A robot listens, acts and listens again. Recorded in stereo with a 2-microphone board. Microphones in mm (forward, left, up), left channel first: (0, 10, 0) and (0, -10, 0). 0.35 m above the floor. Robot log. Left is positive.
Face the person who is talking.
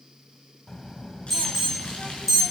note: The child speaking: about 30° left or 150° left.
cmd yaw +30
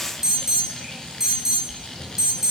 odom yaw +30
end: Facing the child speaking.